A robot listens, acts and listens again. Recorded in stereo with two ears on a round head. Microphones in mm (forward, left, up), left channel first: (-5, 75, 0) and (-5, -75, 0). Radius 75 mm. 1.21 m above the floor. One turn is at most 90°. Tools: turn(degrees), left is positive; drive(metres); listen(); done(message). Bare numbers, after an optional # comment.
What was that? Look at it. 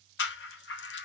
turn(90)
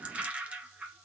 # So it is at 10° right.
turn(-10)
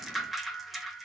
done("Facing the rattle, under 1 m away.")